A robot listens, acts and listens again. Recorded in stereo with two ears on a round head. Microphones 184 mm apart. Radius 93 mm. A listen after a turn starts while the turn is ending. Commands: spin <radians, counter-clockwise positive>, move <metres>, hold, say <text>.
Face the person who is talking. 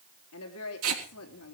spin 1.31
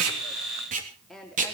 say Found it: a woman speaking, straight ahead, 2 to 4 m away.